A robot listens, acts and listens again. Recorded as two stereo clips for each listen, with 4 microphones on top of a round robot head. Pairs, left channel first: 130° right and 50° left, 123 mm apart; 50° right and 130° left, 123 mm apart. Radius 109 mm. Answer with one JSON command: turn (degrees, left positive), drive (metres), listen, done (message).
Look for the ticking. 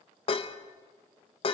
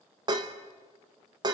{"listen": true}
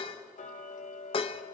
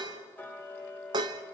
{"turn": -125}
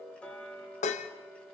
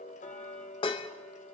{"turn": -50}
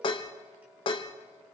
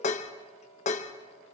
{"turn": -30}
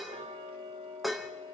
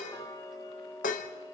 {"turn": 10}
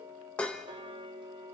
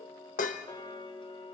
{"done": "Found it: ticking, straight ahead."}